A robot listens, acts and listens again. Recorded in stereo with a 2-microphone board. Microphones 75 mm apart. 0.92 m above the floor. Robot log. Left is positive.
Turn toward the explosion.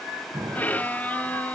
note: The explosion: about 70° right or 110° right.
cmd yaw -70
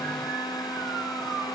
cmd idle
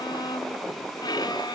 end: I heard an explosion, but can't make it out now. It was about straight ahead or 40° right.